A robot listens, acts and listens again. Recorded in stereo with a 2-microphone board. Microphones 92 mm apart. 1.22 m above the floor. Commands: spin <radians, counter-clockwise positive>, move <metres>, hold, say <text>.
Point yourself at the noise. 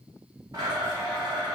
spin -0.79
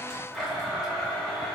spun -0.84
say Facing the blender.